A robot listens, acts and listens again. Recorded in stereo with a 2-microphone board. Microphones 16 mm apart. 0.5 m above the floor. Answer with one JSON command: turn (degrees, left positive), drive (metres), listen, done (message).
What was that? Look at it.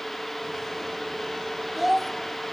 {"turn": -30}
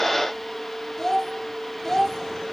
{"turn": 25}
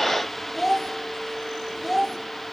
{"done": "Found it: a child speaking, straight ahead, 1 to 2 m away."}